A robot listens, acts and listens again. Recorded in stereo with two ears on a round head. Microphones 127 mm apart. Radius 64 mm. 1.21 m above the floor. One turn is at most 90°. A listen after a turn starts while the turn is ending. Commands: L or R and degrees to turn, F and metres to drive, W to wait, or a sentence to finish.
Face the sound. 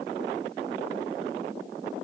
W
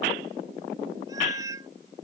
R20
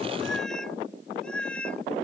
L10
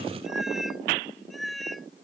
Facing the cat meowing.